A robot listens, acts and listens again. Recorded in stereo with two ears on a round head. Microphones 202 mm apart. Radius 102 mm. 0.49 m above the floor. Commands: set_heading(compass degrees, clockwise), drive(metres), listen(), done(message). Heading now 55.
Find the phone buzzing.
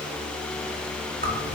listen()
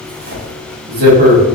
listen()
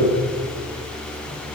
done("I can't make out a phone buzzing to turn to.")